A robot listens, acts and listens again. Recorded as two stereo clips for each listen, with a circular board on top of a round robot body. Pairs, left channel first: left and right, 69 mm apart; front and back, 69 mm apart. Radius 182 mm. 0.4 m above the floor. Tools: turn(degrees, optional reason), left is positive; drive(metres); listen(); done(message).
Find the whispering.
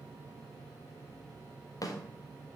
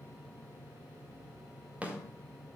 listen()
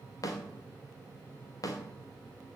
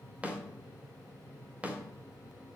listen()
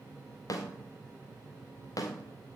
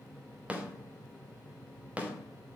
done("I can't make out whispering to turn to.")